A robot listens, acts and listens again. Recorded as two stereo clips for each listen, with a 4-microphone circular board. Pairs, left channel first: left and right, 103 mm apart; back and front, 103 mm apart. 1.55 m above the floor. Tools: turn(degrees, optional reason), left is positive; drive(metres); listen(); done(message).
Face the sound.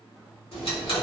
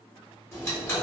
turn(degrees=115, reason="The ticking: 115° left.")
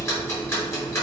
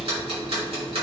turn(degrees=25, reason="The ticking is now 25° left.")
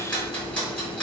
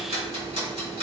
turn(degrees=10, reason="The ticking is now 10° left.")
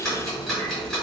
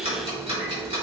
done("Facing the ticking, 1 to 2 m away.")